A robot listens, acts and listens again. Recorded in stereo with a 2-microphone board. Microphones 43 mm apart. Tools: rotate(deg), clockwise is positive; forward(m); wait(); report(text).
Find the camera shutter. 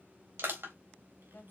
wait()
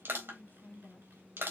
wait()
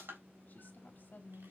report("I can't make out a camera shutter, only a woman speaking and crushing.")